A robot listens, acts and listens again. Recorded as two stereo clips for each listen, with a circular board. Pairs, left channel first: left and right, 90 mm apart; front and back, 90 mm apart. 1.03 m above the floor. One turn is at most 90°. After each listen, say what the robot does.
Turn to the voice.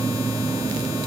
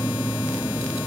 Keep listening.
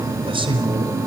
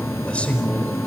Turn 75° right.
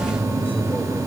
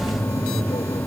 Turn 20° left.
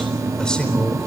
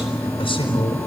Turn 10° left.
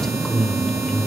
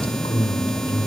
Turn 10° left.
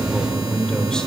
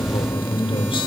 Turn 10° left.
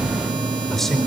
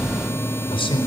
Facing the man speaking.